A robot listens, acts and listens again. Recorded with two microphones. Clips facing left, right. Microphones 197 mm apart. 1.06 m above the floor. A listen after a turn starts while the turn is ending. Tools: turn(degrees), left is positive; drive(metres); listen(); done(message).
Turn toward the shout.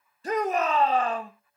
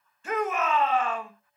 turn(degrees=35)
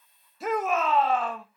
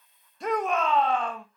done("Facing the shout, 1 to 2 m away.")